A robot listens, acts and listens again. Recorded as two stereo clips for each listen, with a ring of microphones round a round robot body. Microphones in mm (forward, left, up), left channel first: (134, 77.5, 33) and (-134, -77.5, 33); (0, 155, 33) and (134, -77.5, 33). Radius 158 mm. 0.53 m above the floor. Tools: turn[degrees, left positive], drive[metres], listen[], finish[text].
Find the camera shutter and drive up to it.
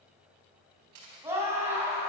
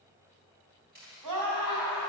Thought: The camera shutter: 120° right.
Action: turn[-120]
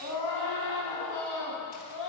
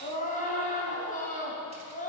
Action: listen[]
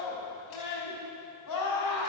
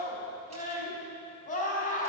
Action: listen[]
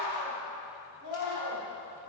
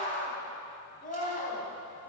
Action: finish[I heard a camera shutter from this way, but can't make it out now. I did not reach it.]